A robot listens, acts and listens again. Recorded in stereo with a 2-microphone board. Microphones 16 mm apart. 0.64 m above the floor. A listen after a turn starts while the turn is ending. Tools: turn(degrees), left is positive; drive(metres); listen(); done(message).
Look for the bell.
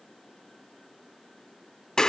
listen()
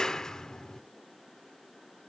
listen()
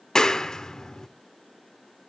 done("I can't make out a bell, only a clap.")